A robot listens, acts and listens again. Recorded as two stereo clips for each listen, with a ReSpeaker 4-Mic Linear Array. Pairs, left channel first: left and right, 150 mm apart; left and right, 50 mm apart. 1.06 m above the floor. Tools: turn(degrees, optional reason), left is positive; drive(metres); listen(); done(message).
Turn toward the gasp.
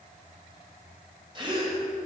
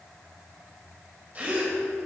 turn(degrees=-35, reason="The gasp: about 35° right or 145° right.")
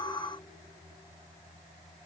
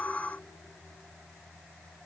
listen()
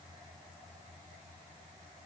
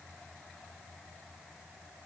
done("I heard a gasp, but can't make it out now. It was about straight ahead or 110° right.")